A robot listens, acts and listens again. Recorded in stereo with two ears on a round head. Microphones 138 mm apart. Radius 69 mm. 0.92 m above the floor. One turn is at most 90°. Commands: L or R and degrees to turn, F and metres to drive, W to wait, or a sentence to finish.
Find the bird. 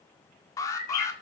L60
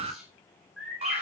Found it: a bird, straight ahead.